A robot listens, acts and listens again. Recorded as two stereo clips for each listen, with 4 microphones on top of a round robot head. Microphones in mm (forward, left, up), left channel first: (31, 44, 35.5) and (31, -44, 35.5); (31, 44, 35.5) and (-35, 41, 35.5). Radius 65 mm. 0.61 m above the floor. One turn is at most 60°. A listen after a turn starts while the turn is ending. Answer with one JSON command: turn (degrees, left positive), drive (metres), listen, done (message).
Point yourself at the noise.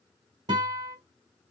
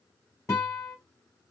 {"turn": -50}
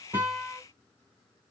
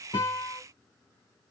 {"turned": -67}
{"turn": 15}
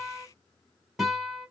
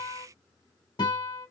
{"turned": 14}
{"done": "Found it: a guitar, straight ahead, 2 to 4 m away."}